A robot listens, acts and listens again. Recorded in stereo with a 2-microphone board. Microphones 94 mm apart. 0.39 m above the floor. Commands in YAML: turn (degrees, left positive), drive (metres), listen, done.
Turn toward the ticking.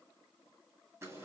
listen: true
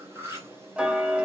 turn: -30
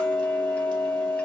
turn: 15
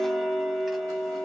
done: "Facing the ticking."